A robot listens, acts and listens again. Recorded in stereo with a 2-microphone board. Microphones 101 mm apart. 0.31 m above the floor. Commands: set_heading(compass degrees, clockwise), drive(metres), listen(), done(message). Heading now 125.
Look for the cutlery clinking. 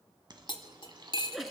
set_heading(75)
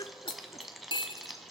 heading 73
set_heading(3)
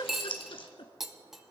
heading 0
done("Found it: cutlery clinking, straight ahead.")